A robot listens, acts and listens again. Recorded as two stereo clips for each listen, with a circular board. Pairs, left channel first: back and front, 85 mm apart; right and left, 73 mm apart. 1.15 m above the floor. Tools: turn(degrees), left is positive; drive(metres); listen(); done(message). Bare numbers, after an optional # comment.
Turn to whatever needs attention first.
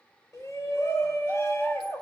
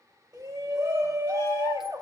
# The shout: 125° left.
turn(125)
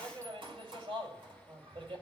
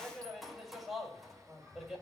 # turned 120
done("Found it: a shout, straight ahead, over 4 m away.")